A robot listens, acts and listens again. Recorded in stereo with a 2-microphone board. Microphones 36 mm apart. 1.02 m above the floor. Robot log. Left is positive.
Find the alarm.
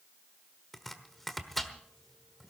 cmd idle
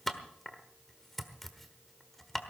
cmd idle
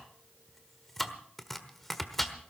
end: I can't make out an alarm, only chopping.